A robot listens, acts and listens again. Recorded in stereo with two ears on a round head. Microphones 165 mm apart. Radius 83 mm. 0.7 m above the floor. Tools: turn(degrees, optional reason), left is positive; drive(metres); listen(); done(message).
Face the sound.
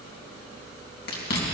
turn(degrees=60, reason="The chewing: about 60° left or 120° left.")
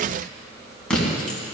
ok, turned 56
done("Facing the chewing, 2 to 4 m away.")